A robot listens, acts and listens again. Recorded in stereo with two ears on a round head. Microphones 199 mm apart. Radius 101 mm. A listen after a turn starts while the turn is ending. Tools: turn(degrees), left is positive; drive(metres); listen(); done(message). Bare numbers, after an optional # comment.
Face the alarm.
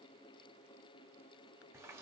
listen()
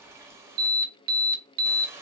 # The alarm: about 45° right or 135° right.
turn(-45)
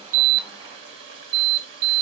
# So it is at 85° right.
turn(-85)
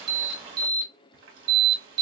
# The alarm is now 20° right.
turn(-20)
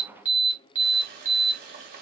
# The alarm is now 10° right.
turn(-10)
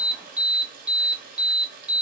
done("Found it: an alarm, straight ahead.")